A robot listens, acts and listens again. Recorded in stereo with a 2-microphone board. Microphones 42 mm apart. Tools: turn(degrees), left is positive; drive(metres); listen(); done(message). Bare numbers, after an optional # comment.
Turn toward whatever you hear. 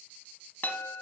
# The chime: about 45° left or 135° left.
turn(45)
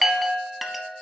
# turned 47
done("Found it: a chime, straight ahead, under 1 m away.")